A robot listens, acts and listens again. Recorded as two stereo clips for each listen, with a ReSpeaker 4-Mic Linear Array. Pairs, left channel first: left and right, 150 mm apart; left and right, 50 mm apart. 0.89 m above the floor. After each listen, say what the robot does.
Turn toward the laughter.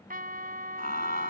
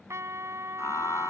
Turn 90° left.
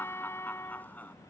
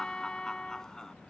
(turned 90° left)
Turn 10° left.
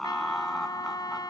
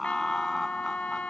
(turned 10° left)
Facing the laughter.